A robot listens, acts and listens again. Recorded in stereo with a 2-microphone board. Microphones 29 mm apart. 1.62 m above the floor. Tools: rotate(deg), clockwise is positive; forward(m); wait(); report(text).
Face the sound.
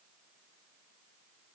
wait()
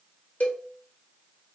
rotate(-60)
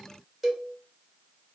report("Facing the cowbell, 1 to 2 m away.")